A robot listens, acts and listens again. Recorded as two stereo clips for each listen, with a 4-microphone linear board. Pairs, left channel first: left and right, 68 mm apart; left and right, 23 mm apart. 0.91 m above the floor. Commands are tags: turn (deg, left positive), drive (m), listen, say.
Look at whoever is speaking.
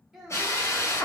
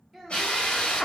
<turn deg="-30"/>
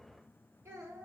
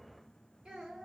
<turn deg="-140"/>
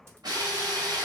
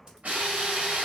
<listen/>
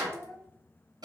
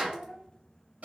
<turn deg="-50"/>
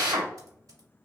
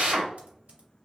<listen/>
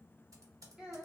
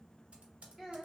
<turn deg="-15"/>
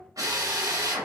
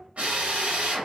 <say>Facing the child speaking.</say>